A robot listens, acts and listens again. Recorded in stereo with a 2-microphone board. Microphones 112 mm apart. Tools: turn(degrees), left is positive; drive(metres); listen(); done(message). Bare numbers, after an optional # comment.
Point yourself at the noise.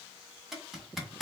turn(-30)
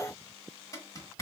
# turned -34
# So it is at 30° left.
turn(30)
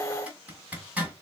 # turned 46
# The zipper is now 15° right.
turn(-15)
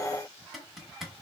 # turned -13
done("Facing the zipper.")